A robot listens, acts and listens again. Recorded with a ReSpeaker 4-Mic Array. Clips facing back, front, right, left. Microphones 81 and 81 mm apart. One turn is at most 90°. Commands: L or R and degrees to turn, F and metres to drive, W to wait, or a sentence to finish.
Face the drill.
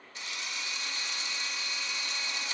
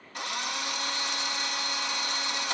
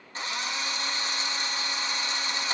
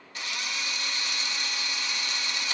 R30
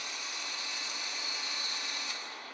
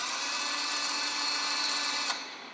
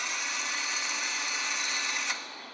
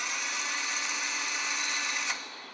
Facing the drill, 1 to 2 m away.